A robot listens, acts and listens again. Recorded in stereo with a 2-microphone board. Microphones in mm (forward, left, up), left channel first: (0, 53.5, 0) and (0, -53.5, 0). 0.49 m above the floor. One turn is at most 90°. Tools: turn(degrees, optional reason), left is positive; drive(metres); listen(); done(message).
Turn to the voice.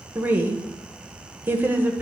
turn(degrees=-20, reason="The woman speaking: about 20° right or 160° right.")
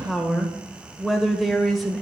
done("Facing the woman speaking.")